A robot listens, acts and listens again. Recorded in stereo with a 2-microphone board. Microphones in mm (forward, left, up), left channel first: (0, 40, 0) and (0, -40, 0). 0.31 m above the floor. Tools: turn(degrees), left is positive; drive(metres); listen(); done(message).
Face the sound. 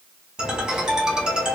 turn(degrees=-30)
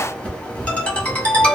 turn(degrees=20)
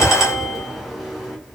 done("Found it: a ringtone, straight ahead.")